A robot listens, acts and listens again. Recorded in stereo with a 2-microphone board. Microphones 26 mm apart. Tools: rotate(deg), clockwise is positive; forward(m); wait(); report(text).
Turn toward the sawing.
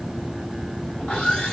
rotate(-40)
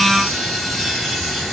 report("Found it: sawing, straight ahead, 2 to 4 m away.")